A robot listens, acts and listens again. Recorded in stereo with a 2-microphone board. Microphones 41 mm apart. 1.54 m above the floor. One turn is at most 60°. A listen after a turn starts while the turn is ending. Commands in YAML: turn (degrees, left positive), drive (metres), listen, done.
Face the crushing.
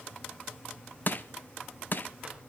turn: 50
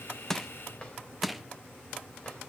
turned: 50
done: "Found it: crushing, straight ahead, under 1 m away."